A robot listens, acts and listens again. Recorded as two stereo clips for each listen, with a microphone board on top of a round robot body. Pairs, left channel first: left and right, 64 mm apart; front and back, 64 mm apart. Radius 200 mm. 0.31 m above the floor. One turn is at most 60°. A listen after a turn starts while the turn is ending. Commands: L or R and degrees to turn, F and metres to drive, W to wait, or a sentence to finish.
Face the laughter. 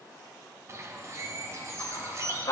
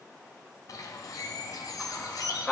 L60
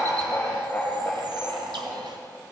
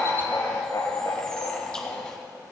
L20
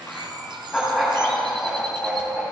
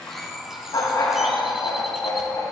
Found it: laughter, straight ahead.